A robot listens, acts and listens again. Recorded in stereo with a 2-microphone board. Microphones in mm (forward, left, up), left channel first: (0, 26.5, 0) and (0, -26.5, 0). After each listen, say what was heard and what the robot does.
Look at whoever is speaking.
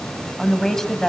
Turn 30° left.
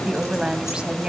So it is at 20° right. Turn 20° right.
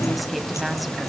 Facing the woman speaking, 2 to 4 m away.